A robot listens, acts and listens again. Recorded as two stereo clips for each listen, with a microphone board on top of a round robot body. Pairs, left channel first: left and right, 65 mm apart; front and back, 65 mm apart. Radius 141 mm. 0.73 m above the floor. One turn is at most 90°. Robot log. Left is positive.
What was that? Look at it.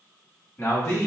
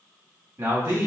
note: The man speaking: 135° left.
cmd yaw +90
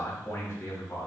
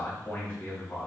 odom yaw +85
note: The man speaking is now 45° left.
cmd yaw +45
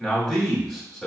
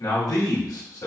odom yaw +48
end: Found it: a man speaking, straight ahead, 1 to 2 m away.